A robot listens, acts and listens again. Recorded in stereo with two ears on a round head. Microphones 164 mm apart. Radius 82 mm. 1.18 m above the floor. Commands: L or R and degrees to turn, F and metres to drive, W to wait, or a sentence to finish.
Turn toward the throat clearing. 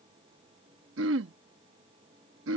R90
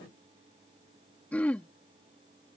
L10
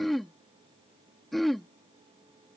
Facing the throat clearing.